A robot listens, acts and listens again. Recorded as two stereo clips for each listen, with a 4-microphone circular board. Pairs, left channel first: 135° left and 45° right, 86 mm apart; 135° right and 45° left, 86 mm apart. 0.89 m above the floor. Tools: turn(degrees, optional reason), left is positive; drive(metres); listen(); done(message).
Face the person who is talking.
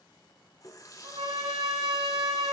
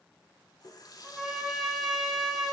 listen()
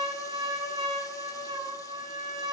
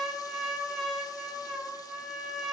listen()
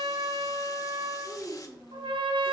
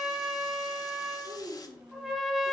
turn(degrees=45, reason="The child speaking: 45° left.")
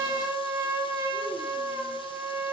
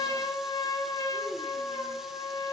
listen()
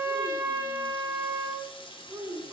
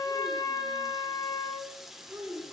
done("Found it: a child speaking, straight ahead, 2 to 4 m away.")